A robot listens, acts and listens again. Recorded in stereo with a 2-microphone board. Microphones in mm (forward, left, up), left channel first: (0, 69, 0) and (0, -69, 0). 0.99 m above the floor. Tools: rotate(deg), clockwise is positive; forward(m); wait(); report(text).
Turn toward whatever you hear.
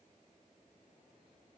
wait()
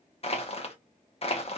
rotate(-45)
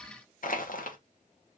rotate(-85)
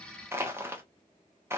rotate(20)
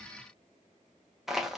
report("Facing the crushing, 1 to 2 m away.")